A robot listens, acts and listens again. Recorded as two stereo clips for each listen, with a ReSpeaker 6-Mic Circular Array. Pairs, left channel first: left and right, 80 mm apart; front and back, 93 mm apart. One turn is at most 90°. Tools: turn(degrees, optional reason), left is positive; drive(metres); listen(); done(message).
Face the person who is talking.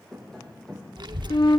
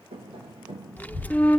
turn(degrees=-70, reason="The child speaking: 70° right.")
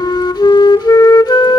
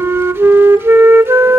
listen()
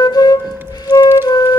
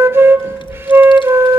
turn(degrees=-30, reason="The child speaking is now 30° right.")
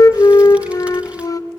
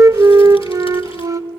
listen()
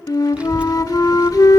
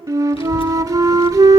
turn(degrees=-15, reason="The child speaking is now 15° right.")
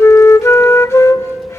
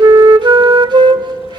listen()
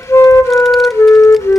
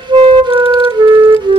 done("Found it: a child speaking, straight ahead, under 1 m away.")